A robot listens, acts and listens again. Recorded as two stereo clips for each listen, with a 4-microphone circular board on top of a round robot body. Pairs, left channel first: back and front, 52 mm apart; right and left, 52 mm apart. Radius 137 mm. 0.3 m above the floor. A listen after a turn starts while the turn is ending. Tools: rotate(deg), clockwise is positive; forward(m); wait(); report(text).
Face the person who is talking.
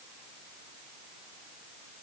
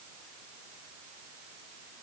wait()
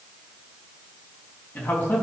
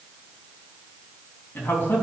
rotate(135)
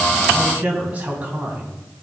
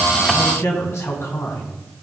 rotate(65)
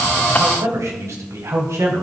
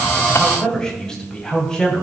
rotate(15)
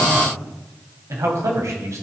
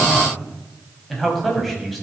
report("Found it: a man speaking, straight ahead.")